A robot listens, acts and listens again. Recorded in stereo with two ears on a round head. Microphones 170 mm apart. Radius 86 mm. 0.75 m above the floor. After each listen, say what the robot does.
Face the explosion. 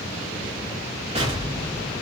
Turn 35° right.
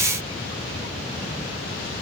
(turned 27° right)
Keep listening.
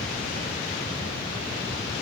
I heard an explosion, but can't make it out now. It was about 5° right or 120° right.